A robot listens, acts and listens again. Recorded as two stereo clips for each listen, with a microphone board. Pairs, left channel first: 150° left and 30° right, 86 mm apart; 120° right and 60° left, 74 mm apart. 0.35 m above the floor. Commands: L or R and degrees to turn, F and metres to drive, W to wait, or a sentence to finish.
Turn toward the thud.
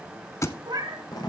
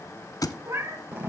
R155
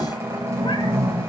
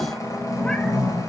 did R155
Facing where the thud came from. I can't hear it now.